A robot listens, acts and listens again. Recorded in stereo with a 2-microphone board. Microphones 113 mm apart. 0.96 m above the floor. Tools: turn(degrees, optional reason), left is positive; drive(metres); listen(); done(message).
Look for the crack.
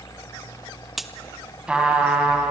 turn(degrees=30)
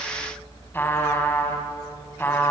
listen()
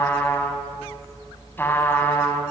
done("I heard a crack, but can't make it out now. It was about 30° right or 150° left.")